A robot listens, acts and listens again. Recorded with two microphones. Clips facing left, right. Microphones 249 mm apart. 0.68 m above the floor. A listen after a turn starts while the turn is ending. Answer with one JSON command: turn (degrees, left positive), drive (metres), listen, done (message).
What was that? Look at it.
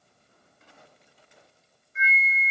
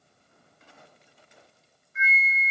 {"turn": 35}
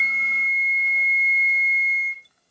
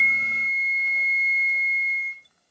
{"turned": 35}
{"turn": 100}
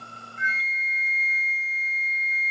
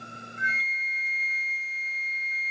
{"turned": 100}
{"turn": 30}
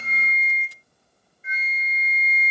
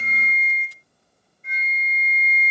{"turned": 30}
{"turn": 10}
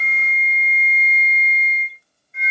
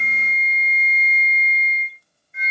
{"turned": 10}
{"done": "Facing the flute, 1 to 2 m away."}